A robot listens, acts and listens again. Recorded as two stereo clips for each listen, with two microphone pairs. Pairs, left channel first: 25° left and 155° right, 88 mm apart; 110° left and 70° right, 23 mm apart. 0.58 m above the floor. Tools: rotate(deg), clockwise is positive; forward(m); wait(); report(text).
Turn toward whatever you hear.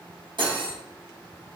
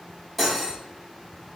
rotate(170)
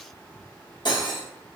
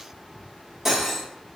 report("Facing the cutlery clinking, under 1 m away.")